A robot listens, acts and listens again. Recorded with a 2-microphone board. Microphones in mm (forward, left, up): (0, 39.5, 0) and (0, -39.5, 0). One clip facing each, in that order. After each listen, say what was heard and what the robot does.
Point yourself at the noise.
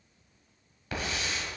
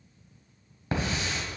The hiss: about 30° right or 150° right. Turn 30° right.
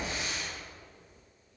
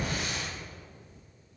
So it is at 115° right. Turn 115° right.
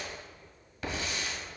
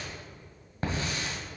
The hiss is now 40° right. Turn 40° right.
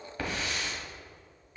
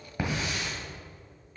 The hiss is now 15° right. Turn 15° right.
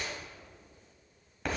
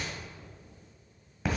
Found it: a hiss, straight ahead, 1 to 2 m away.